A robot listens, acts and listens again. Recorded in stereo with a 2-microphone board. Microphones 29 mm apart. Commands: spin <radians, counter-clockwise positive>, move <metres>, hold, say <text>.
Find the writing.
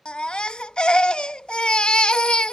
hold
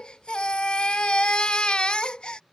hold
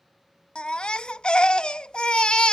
say I can't make out writing, only a baby crying.